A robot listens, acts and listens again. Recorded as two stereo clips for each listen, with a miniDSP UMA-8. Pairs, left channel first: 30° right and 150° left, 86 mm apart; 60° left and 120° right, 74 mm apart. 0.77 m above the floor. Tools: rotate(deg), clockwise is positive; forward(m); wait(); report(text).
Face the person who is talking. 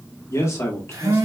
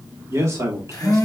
rotate(85)
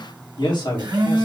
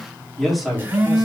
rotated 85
rotate(30)
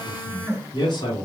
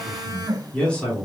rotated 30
rotate(15)
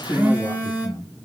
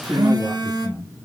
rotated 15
rotate(15)
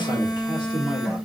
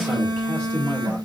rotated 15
report("Facing the man speaking, 2 to 4 m away.")